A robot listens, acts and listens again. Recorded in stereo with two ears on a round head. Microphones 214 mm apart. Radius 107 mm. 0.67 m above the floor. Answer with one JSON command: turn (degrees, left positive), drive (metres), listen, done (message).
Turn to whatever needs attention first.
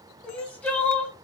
{"turn": 30}
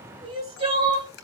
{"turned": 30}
{"turn": -25}
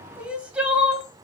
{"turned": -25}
{"done": "Found it: crying, straight ahead, 1 to 2 m away."}